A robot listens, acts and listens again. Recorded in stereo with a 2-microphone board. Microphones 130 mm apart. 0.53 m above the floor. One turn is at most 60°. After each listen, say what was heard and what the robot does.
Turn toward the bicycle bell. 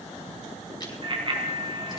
The bicycle bell: about 40° right or 140° right. Turn 40° right.
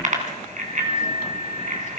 So it is at 100° right. Turn 60° right.
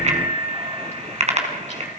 The bicycle bell is now 60° right. Turn 60° right.
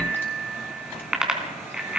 The bicycle bell is now 10° right. Turn 10° right.
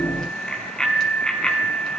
Facing the bicycle bell.